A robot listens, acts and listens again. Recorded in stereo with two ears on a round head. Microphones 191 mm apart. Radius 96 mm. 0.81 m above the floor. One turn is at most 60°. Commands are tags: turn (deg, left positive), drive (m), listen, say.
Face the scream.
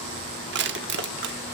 <listen/>
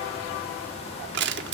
<listen/>
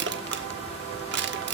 <say>I can't make out a scream to turn to.</say>